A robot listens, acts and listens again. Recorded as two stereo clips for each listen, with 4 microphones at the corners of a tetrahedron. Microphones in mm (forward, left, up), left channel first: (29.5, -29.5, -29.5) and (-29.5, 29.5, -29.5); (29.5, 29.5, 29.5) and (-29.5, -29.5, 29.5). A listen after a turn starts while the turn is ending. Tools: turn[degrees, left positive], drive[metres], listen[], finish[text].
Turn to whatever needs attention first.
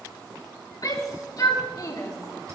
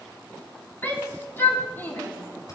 Thought: The shout: 20° right.
Action: turn[-20]
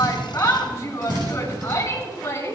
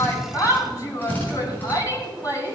Action: finish[Facing the shout.]